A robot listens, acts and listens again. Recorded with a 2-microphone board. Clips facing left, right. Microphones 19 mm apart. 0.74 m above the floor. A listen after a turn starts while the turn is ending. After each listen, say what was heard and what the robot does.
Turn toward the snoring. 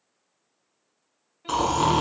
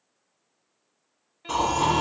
The snoring: about 65° left or 115° left. Turn 65° left.
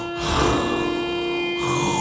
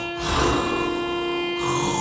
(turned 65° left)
Found it: snoring, straight ahead.